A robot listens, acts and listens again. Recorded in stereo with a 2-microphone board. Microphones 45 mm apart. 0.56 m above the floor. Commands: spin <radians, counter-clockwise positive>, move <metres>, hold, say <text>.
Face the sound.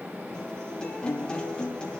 spin 0.35
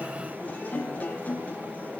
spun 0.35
spin 2.44
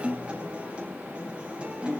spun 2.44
spin -0.52
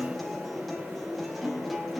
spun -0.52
say Facing the guitar, over 4 m away.